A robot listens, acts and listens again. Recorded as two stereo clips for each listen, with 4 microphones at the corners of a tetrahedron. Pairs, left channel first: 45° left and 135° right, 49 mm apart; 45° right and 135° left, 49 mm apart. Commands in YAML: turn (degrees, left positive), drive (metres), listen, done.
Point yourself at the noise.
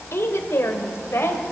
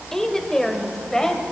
turn: 30
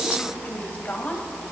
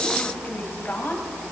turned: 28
done: "Facing the woman speaking, 2 to 4 m away."